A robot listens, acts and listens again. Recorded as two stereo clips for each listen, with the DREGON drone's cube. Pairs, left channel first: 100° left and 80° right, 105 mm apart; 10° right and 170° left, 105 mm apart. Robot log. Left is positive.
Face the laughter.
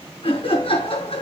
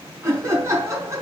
note: The laughter: 110° left.
cmd yaw +110
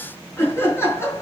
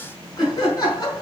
note: The laughter is now 35° left.
cmd yaw +35
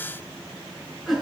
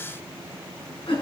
end: Facing the laughter.